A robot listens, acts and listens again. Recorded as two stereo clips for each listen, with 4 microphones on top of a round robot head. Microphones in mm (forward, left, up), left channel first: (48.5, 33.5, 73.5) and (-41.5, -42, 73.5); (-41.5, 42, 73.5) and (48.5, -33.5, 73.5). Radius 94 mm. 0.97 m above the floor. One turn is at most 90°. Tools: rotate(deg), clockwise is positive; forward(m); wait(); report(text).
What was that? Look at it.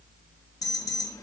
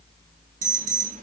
rotate(20)
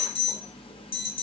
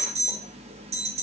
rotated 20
report("Facing the alarm.")